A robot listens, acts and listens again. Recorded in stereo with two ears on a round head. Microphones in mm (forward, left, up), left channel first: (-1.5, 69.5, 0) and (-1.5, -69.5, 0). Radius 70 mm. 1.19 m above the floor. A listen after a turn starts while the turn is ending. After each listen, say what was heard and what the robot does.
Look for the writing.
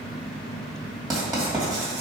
The writing: about 25° right or 155° right. Turn 25° right.
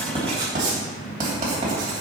So it is at 130° right. Turn 130° right.
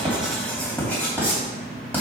The writing is now 10° left. Turn 10° left.
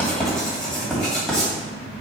Found it: writing, straight ahead, 2 to 4 m away.